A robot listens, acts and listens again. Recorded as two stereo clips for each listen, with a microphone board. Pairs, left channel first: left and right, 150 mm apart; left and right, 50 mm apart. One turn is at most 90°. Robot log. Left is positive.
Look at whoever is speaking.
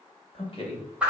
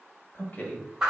note: The man speaking: about 40° left or 140° left.
cmd yaw +40
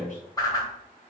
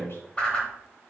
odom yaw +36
note: So it is at 95° left.
cmd yaw +90
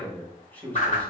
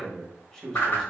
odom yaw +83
note: The man speaking is now 10° left.
cmd yaw +10
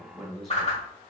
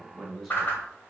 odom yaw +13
end: Facing the man speaking, 1 to 2 m away.